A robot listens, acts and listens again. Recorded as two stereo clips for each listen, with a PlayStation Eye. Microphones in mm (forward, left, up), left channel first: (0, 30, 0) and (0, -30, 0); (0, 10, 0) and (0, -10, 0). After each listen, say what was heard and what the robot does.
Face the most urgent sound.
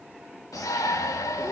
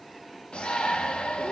The shout: about 70° left or 110° left. Turn 70° left.
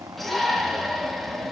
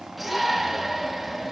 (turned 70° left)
Facing the shout, 2 to 4 m away.